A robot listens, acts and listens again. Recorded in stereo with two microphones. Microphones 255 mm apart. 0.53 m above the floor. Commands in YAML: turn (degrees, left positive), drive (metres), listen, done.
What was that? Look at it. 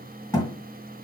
turn: 30
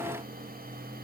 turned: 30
listen: true
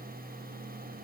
done: "I heard a thud, but can't make it out now. It was about 15° right or 135° left."